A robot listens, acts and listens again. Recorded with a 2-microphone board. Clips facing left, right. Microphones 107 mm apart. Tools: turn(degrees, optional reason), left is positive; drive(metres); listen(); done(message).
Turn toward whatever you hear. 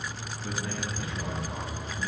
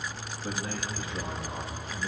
turn(degrees=-25, reason="The man speaking: about 25° right or 155° right.")
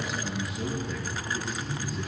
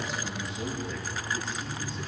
done("Facing the man speaking, over 4 m away.")